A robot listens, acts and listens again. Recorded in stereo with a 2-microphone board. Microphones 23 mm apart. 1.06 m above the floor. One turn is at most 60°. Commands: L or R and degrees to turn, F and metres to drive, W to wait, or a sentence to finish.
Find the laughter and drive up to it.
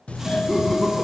L20
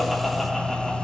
W
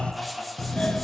F1.0
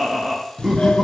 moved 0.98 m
F1.0
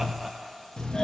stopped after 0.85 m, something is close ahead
R15
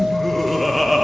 Arrived at the laughter, straight ahead.